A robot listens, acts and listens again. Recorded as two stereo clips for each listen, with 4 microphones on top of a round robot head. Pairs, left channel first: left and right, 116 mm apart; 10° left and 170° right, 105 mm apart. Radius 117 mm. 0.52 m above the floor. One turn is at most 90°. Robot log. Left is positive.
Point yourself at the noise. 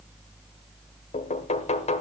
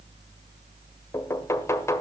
note: The knocking: 75° left.
cmd yaw +75
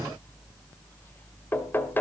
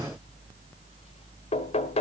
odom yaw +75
note: The knocking is now 20° left.
cmd yaw +20
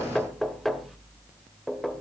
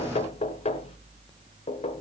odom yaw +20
end: Facing the knocking, 1 to 2 m away.